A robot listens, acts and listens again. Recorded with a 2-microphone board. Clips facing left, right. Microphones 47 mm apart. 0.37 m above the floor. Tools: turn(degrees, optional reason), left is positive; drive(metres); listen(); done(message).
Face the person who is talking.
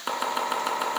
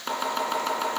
listen()
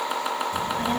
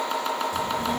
turn(degrees=40, reason="The child speaking: about 40° left or 140° left.")
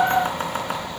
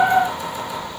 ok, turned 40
turn(degrees=95, reason="So it is at 95° left.")
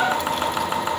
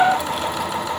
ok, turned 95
done("Facing the child speaking.")